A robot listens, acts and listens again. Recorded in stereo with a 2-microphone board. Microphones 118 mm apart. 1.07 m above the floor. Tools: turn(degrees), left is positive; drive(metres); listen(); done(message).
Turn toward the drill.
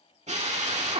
turn(degrees=-90)
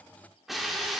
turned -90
done("Found it: a drill, straight ahead, 1 to 2 m away.")